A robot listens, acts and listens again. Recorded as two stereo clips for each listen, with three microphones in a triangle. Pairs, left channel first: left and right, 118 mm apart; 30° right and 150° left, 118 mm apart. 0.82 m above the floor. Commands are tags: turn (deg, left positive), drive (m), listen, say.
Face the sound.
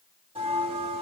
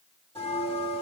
<turn deg="-55"/>
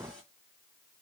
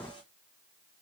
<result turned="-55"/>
<listen/>
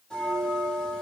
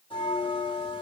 <turn deg="10"/>
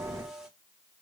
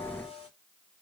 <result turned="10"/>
<say>Facing the bell, 1 to 2 m away.</say>